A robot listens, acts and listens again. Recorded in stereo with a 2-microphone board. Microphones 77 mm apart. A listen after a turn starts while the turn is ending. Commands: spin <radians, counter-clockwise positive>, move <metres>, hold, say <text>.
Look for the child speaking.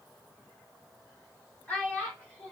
spin 0.35
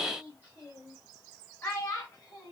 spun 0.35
spin 0.61
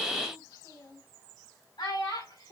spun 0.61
spin 1.92
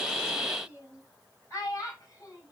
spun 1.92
spin 0.70
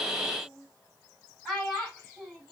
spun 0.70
say Found it: a child speaking, straight ahead.